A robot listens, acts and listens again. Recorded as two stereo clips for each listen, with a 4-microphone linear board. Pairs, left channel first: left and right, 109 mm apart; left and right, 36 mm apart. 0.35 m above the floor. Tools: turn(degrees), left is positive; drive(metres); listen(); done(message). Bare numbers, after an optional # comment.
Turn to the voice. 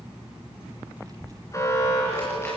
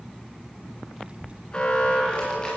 # The child speaking: about 35° right or 145° right.
turn(-35)
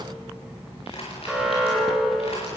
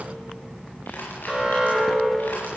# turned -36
listen()
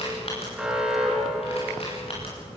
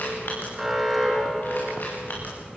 done("Facing the child speaking.")